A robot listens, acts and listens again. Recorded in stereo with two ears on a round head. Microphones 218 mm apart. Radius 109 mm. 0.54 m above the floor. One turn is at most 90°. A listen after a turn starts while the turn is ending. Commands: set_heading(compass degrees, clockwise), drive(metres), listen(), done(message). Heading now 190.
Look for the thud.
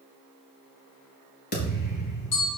set_heading(150)
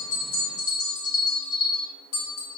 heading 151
listen()
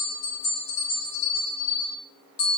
done("I heard a thud, but can't make it out now. It was about straight ahead or 100° left.")